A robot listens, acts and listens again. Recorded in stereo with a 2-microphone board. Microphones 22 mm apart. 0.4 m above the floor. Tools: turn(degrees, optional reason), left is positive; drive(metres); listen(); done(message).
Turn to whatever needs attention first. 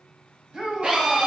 turn(degrees=-50, reason="The shout: about 50° right or 130° right.")
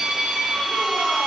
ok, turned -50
listen()
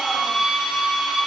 listen()
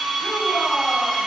done("I heard a shout, but can't make it out now. It was about straight ahead or 80° right.")